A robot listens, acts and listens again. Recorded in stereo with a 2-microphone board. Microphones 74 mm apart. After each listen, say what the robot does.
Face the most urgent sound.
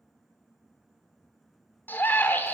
Turn 25° left.
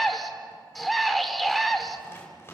Facing the scream.